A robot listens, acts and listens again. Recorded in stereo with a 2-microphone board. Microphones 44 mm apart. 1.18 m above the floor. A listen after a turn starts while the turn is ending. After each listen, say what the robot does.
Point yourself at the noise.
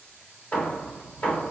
Turn 30° left.
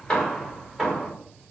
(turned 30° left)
Facing the hammering.